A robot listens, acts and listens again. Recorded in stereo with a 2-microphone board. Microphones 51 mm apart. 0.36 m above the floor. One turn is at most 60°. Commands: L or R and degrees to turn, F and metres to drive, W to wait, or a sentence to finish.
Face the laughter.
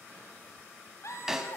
L60
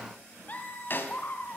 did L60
L40
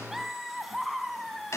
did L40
Facing the laughter.